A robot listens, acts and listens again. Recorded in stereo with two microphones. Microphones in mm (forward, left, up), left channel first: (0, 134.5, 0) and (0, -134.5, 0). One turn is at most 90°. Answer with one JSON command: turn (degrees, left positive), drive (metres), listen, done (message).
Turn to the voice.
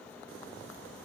{"listen": true}
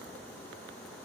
{"listen": true}
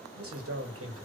{"turn": -55}
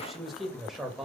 {"done": "Found it: a man speaking, straight ahead, 2 to 4 m away."}